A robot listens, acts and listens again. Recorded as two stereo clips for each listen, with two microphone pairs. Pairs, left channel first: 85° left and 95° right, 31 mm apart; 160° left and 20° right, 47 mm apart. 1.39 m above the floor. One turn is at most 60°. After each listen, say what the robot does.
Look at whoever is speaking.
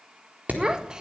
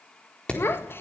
Turn 60° right.
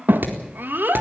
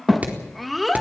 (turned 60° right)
Turn 60° right.
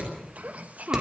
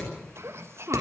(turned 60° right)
Turn 55° right.
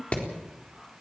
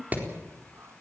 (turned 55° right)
Keep listening.
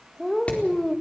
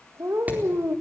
Facing the child speaking, 1 to 2 m away.